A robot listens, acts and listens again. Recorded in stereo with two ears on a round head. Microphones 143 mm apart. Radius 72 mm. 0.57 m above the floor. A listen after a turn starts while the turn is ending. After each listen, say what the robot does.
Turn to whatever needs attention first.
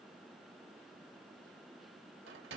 Keep listening.
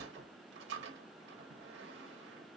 Keep listening.
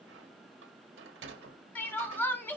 Turn 30° left.
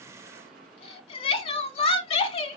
Turn 135° left.
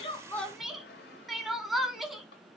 Facing the crying.